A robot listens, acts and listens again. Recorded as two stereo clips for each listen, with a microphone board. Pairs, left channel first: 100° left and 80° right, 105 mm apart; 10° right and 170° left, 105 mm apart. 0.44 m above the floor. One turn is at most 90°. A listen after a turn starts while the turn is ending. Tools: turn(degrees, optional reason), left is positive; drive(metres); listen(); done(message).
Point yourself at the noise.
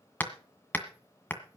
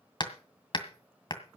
turn(degrees=30, reason="The hammering: 30° left.")
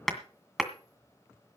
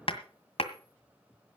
turn(degrees=10, reason="The hammering is now 10° left.")
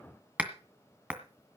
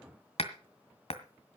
done("Facing the hammering.")